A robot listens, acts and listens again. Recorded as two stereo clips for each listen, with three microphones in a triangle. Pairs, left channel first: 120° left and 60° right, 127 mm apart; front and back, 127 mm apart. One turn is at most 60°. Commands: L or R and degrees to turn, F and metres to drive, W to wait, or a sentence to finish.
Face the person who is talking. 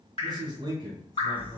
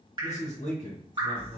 Facing the man speaking.